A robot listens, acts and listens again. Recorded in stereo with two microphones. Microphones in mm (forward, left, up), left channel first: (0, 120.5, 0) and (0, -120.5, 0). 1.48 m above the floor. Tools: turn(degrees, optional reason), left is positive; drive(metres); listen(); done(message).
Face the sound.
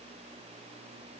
listen()
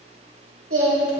turn(degrees=-65, reason="The singing: about 65° right or 115° right.")
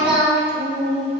turn(degrees=-45, reason="So it is at 45° right.")
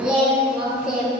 done("Found it: singing, straight ahead.")